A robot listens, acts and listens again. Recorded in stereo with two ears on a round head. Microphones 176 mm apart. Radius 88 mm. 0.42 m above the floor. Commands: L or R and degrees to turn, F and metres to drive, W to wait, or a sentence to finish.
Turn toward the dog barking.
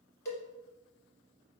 W
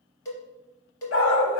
L70
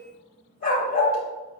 L45
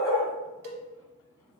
L15
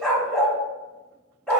Facing the dog barking, under 1 m away.